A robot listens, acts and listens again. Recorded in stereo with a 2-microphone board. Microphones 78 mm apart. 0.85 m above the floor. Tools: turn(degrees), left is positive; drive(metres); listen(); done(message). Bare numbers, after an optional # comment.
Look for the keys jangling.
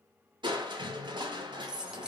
turn(-30)
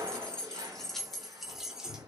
turn(-30)
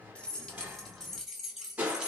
turn(-30)
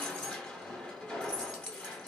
# So it is at 15° left.
turn(15)
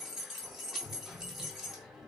done("Found it: keys jangling, straight ahead.")